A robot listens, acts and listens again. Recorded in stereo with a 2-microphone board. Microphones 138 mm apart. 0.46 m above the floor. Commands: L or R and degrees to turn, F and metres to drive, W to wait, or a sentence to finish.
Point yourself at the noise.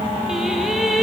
L30
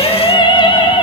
L145
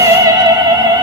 R30
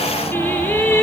L15
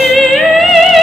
Facing the singing, 2 to 4 m away.